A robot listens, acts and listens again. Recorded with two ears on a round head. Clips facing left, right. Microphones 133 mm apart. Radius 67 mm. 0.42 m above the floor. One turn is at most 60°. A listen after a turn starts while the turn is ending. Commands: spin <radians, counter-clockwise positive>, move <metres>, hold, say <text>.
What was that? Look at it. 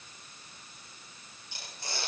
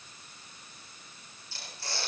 spin 0.26
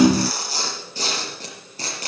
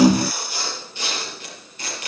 spin 1.05
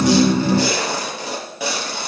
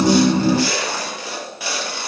spin 1.05
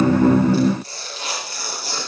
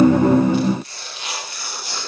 spin 0.52
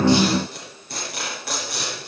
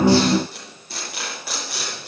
say Found it: tearing paper, straight ahead, over 4 m away.